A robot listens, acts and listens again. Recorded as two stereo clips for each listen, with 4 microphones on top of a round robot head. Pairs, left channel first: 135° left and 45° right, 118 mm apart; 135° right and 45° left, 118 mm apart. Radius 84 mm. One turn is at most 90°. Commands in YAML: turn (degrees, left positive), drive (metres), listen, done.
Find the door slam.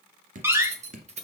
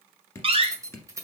turn: 20
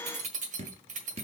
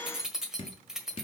done: "Facing where the door slam came from. I can't hear it now."